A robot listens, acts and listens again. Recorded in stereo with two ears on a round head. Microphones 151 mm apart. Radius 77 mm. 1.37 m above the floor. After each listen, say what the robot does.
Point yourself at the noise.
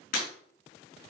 Turn 45° left.
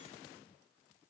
Keep listening.
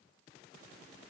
I heard breaking glass, but can't make it out now. It was about straight ahead or 90° left.